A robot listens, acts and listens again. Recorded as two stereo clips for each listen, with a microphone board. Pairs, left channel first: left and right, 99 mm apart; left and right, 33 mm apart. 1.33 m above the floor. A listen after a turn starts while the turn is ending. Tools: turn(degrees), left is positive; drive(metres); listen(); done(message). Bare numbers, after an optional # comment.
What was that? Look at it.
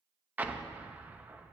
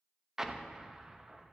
# The explosion: about 15° right or 165° right.
turn(-15)
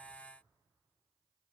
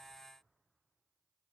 listen()
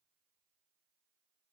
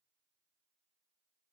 done("I heard an explosion, but can't make it out now. It was about straight ahead or 150° right.")